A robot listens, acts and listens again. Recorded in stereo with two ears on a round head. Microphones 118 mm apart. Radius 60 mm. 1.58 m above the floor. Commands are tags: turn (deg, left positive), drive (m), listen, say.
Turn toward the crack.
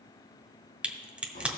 <turn deg="-30"/>
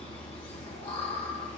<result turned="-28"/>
<listen/>
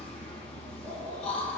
<say>I heard a crack, but can't make it out now. It was about 20° left or 145° right.</say>